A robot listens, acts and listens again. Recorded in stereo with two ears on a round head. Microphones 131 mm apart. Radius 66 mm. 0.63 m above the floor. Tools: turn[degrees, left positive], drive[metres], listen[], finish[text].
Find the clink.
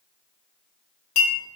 Thought: The clink: about 55° left or 125° left.
Action: turn[55]
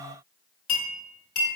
Thought: So it is at 65° left.
Action: turn[65]
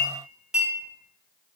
Action: finish[Found it: a clink, straight ahead.]